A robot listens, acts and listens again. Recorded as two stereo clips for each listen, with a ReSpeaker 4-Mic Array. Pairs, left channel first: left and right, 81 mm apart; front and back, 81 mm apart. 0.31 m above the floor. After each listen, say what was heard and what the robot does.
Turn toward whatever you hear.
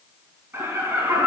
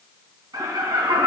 The laughter: 155° right. Turn 155° right.
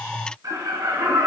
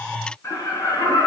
The laughter is now 50° right. Turn 50° right.
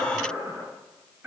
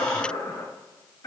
The laughter is now 20° right. Turn 20° right.
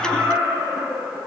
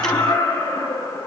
Found it: laughter, straight ahead.